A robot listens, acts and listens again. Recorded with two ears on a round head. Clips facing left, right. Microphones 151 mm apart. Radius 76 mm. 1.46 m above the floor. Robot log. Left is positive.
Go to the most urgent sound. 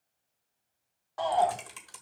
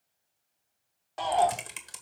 note: The shout: about 25° right or 155° right.
cmd yaw -25
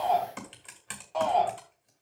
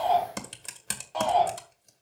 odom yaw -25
cmd fwd 1.0
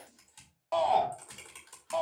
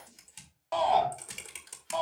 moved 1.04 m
cmd fwd 1.0
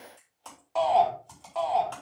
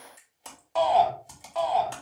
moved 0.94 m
cmd fwd 1.0
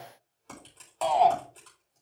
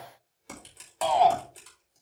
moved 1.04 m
cmd fwd 1.0
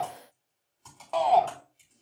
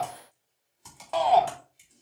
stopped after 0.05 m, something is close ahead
end: Arrived at the shout, straight ahead.